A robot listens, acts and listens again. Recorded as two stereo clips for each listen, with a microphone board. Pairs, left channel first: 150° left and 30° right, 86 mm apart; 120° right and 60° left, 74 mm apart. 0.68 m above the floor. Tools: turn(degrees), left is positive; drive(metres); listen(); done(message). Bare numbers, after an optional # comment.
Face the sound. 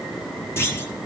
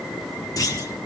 # The clunk: 155° right.
turn(-155)
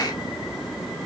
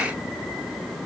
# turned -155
done("I heard a clunk from this way, but can't make it out now.")